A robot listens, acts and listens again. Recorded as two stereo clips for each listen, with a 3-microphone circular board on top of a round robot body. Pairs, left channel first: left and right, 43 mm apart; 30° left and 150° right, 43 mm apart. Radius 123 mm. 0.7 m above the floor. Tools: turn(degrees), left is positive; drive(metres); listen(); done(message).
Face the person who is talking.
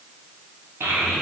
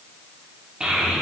turn(degrees=-90)
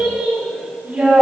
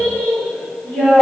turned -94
turn(degrees=-25)
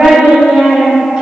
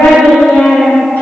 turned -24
turn(degrees=-10)
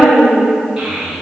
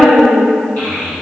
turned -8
turn(degrees=-10)
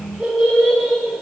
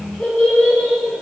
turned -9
done("Facing the child speaking.")